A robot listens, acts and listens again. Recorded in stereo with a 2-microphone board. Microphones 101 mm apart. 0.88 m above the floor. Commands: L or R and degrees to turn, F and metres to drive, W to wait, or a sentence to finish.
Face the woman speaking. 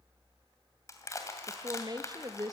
R40
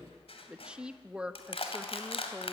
R10
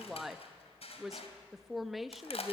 Found it: a woman speaking, straight ahead.